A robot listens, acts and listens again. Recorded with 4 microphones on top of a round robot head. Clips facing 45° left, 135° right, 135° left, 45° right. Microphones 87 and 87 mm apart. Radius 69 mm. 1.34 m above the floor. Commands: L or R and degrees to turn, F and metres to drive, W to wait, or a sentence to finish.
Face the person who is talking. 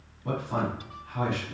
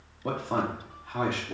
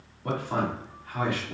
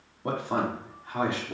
R110
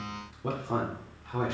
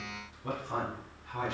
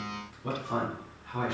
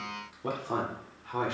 Found it: a man speaking, straight ahead.